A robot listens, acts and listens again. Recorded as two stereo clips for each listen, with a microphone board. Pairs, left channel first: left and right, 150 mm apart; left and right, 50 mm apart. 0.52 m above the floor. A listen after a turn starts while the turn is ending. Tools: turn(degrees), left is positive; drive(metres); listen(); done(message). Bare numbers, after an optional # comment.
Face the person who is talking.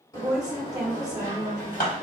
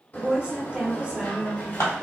# The woman speaking: about 25° right or 155° right.
turn(-25)
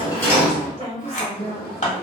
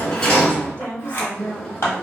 # So it is at 130° right.
turn(-130)
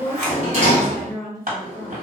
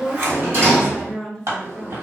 done("Found it: a woman speaking, straight ahead.")